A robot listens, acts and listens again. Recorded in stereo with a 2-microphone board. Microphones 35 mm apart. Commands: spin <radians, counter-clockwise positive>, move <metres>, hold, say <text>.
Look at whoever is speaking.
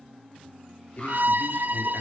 spin 0.96
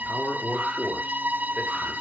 spin 0.87
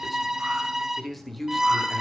say Found it: a man speaking, straight ahead, 2 to 4 m away.